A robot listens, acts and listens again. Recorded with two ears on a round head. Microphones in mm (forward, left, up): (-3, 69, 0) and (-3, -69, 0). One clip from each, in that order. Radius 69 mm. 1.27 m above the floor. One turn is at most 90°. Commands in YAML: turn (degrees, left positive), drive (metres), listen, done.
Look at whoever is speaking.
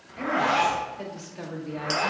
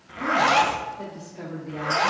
turn: 75
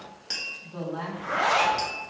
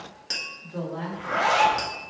turn: 15
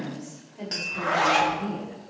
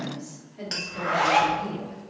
turn: -25
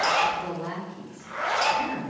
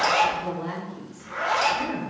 turn: -10
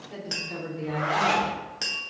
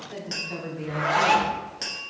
done: "Facing the woman speaking."